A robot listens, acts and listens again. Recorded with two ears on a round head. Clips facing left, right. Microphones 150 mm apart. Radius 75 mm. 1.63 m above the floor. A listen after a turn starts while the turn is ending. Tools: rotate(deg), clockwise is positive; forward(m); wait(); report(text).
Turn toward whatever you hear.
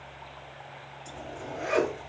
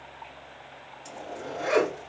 rotate(60)
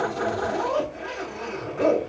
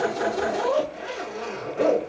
rotate(45)
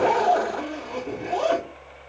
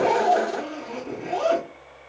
rotate(-15)
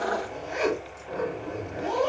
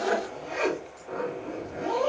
report("Facing the zipper, 1 to 2 m away.")